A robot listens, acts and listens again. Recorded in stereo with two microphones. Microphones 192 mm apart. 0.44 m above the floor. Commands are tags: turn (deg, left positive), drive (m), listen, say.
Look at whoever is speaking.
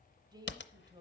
<turn deg="-25"/>
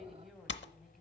<say>Facing the woman speaking.</say>